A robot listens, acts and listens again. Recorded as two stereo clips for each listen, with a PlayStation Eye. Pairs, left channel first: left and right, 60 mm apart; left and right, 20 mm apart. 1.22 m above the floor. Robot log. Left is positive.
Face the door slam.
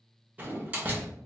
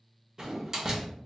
note: The door slam: about 25° right or 155° right.
cmd yaw -25
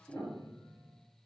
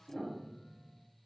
cmd idle
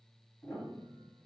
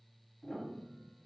end: I heard a door slam, but can't make it out now. It was about straight ahead or 130° right.